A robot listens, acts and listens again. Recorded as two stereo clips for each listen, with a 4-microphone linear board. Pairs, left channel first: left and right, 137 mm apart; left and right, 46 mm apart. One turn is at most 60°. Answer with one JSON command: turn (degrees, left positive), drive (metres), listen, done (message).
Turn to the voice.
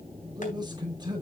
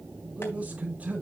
{"turn": -30}
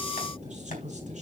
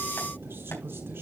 {"turn": -60}
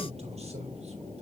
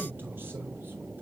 {"turn": -55}
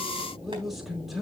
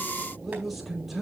{"done": "Facing the man speaking."}